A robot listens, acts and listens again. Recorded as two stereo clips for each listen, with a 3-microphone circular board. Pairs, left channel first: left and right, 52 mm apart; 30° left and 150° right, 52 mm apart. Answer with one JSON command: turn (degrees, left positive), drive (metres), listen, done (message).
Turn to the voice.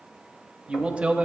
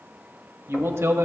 {"turn": -155}
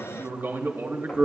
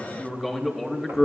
{"turn": -60}
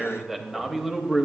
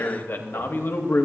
{"done": "Facing the man speaking, under 1 m away."}